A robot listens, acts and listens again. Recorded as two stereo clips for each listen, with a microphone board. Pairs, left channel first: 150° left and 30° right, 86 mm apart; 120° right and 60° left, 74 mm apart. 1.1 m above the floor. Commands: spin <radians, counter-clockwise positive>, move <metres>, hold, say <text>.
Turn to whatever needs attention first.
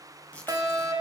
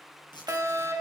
spin 0.17
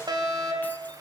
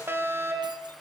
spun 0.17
say Facing the fire alarm.